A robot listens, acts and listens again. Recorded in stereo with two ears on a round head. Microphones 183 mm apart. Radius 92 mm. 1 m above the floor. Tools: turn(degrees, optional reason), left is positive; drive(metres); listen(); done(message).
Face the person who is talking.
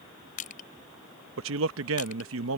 turn(degrees=-75, reason="The man speaking: about 75° right or 105° right.")
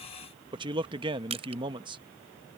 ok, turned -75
turn(degrees=-25, reason="So it is at 25° right.")
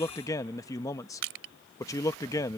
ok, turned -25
turn(degrees=15, reason="The man speaking is now 15° left.")
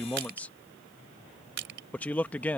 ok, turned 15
turn(degrees=10, reason="The man speaking is now 10° left.")
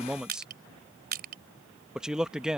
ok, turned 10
done("Facing the man speaking.")